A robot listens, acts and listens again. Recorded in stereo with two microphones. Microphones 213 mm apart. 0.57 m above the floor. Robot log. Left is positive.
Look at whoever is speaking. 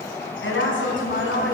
note: The woman speaking: about 65° left or 115° left.
cmd yaw +65
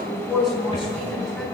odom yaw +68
end: Found it: a woman speaking, straight ahead, over 4 m away.